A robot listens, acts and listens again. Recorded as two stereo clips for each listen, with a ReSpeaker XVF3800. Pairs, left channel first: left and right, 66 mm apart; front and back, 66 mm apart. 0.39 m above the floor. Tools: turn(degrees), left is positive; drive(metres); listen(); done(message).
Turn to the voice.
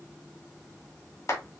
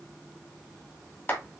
listen()
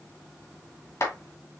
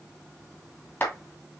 listen()
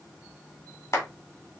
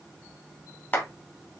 done("I can't make out anyone speaking to turn to.")